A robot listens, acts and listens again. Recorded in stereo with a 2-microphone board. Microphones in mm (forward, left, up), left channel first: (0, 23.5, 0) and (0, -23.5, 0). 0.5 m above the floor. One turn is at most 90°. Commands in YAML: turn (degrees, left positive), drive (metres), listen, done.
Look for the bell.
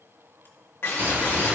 turn: -40
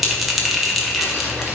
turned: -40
done: "Facing the bell."